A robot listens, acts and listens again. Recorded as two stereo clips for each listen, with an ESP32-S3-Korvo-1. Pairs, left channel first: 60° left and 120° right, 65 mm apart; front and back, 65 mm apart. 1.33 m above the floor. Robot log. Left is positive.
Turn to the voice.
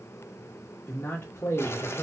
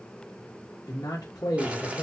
note: The man speaking: 10° left.
cmd yaw +10
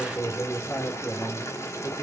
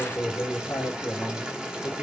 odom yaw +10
end: Facing the man speaking, 1 to 2 m away.